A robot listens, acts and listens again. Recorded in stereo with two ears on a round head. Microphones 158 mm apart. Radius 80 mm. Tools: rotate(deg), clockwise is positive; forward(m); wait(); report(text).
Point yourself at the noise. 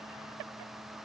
wait()
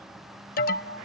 rotate(-50)
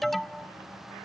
report("Facing the alarm.")